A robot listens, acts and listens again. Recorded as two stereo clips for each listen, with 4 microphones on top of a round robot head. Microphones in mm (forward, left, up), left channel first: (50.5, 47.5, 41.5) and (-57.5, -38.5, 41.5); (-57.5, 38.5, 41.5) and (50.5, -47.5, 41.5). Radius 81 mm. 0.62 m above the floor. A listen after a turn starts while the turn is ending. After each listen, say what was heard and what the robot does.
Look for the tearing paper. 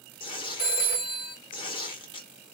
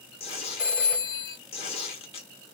The tearing paper: 95° left. Turn 95° left.
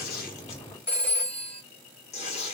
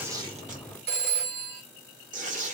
Facing the tearing paper, 1 to 2 m away.